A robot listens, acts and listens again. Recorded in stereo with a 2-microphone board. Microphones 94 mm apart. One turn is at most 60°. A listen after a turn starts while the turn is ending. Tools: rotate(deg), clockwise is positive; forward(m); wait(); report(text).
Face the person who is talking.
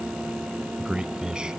rotate(30)
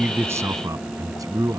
rotate(60)
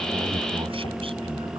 rotate(60)
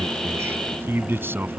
rotate(25)
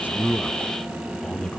rotate(-10)
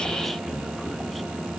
wait()
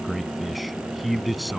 report("Facing the man speaking.")